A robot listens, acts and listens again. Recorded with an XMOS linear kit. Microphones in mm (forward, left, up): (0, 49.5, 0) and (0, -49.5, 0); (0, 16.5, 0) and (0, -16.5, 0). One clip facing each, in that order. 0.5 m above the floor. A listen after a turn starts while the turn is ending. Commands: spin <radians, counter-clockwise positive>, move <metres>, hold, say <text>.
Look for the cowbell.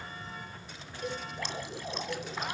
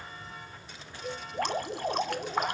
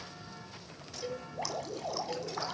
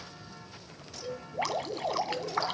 spin 1.05
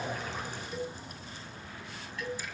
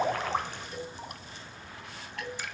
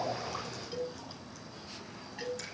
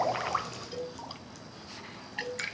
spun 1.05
say Facing the cowbell.